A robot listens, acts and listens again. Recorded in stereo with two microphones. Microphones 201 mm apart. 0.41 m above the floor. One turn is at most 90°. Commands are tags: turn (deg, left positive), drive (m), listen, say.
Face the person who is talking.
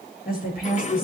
<turn deg="50"/>
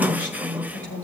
<turn deg="80"/>
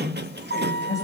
<turn deg="15"/>
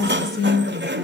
<say>Facing the woman speaking, over 4 m away.</say>